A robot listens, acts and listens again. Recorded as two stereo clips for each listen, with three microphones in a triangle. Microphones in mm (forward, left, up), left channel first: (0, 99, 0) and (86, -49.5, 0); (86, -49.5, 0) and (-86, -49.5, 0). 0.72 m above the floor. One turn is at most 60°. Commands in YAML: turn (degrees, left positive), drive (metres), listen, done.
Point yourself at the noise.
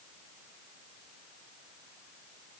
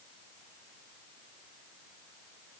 listen: true
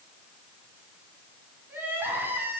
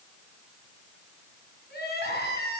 turn: 20
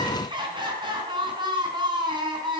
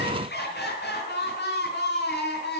done: "Facing the crying, 2 to 4 m away."